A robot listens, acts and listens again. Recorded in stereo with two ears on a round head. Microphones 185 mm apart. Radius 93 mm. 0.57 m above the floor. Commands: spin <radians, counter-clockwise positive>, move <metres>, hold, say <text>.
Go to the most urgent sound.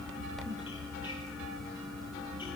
hold
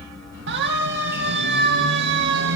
spin -0.96
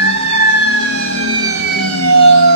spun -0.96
spin -1.22
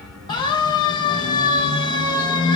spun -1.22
spin 0.35
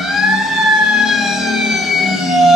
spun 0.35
move 1.0
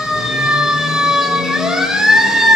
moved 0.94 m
move 1.0
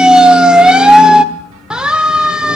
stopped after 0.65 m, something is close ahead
say Arrived at the siren, straight ahead.